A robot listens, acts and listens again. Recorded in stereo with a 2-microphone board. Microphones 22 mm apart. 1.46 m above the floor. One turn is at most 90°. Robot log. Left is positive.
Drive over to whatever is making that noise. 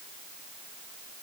cmd idle
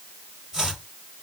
note: The chopping: about 25° right or 155° right.
cmd yaw -25
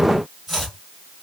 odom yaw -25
cmd fwd 1.0
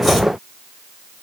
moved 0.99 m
cmd idle
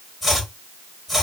cmd fwd 1.0
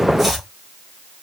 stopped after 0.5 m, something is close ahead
end: I am next to the chopping.